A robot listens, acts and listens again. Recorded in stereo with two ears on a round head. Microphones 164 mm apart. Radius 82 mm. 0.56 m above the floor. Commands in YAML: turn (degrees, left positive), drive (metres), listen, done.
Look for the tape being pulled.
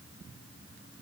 listen: true
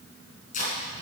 turn: 50
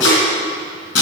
turn: 80
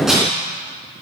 listen: true
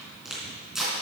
done: "Found it: tape being pulled, straight ahead, 2 to 4 m away."